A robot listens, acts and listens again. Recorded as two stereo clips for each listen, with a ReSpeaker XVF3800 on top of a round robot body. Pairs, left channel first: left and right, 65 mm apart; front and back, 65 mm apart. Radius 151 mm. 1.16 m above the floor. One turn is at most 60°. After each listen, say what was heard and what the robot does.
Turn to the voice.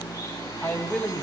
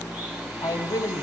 The man speaking: 20° left. Turn 20° left.
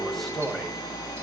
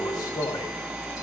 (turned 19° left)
Facing the man speaking, over 4 m away.